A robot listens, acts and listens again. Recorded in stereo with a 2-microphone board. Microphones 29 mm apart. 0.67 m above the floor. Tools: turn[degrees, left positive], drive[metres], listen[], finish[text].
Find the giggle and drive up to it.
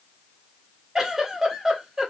Thought: The giggle: about 15° right or 165° right.
Action: turn[-15]
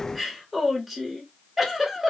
Action: drive[1.0]
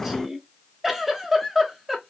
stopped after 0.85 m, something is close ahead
Thought: The giggle is now 10° right.
Action: turn[-10]
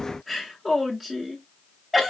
Action: finish[I am next to the giggle.]